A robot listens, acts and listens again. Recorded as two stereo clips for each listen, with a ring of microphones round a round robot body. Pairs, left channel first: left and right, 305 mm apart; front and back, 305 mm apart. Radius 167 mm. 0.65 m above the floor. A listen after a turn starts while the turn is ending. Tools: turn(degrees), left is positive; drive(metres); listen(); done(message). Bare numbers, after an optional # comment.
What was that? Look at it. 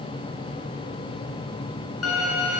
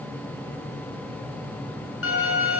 # The violin: 45° left.
turn(45)
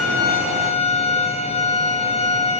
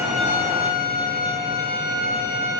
# The violin is now 20° left.
turn(20)
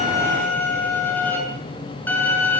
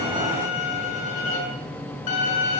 done("Facing the violin, over 4 m away.")